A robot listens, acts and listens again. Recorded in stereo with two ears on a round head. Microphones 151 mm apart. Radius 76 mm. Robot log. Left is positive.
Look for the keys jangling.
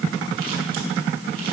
cmd idle
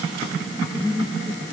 cmd idle
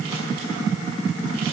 end: I can't make out keys jangling to turn to.